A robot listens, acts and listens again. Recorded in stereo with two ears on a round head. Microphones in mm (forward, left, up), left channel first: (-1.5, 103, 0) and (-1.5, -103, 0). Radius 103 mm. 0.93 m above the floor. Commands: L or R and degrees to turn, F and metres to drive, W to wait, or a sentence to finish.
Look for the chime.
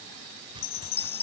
L25
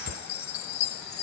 L130
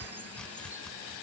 W
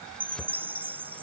R10
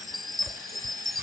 Facing the chime.